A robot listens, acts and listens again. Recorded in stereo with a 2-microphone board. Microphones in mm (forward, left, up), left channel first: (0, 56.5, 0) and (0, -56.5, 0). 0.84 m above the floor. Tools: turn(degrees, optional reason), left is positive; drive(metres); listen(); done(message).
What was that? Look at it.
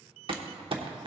turn(degrees=-50, reason="The crumpling: about 50° right or 130° right.")
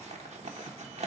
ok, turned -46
turn(degrees=-85, reason="So it is at 85° right.")
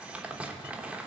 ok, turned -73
turn(degrees=-10, reason="The crumpling is now 10° right.")
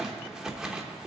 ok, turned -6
done("Found it: crumpling, straight ahead.")